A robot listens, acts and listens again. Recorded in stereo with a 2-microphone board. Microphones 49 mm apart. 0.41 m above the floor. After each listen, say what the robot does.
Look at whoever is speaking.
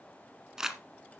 Keep listening.
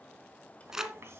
Turn 60° right.
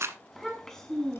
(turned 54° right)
Turn 10° left.
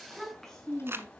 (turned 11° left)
Turn 10° left.
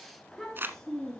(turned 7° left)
Turn 10° left.
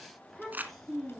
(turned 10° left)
Facing the child speaking, over 4 m away.